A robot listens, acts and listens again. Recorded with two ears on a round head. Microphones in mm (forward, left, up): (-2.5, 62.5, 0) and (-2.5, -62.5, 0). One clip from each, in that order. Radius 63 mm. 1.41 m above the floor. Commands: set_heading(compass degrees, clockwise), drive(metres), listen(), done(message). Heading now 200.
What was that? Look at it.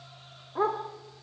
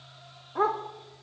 set_heading(220)
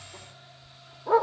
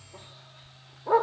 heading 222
done("Found it: a dog barking, straight ahead, 1 to 2 m away.")